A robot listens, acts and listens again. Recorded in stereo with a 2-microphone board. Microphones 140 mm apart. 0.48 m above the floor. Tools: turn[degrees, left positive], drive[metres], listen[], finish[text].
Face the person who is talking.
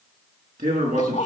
Thought: The man speaking: about 65° right or 115° right.
Action: turn[-65]
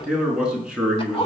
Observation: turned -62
Action: finish[Found it: a man speaking, straight ahead.]